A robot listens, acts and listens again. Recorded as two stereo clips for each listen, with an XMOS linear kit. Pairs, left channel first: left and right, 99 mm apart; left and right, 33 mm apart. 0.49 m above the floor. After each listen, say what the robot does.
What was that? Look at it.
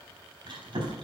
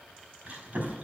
Turn 55° right.
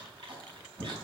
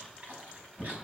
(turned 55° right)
Turn 65° right.
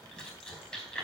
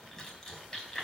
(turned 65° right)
Turn 10° left.
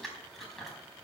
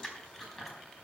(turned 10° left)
Found it: chewing, straight ahead.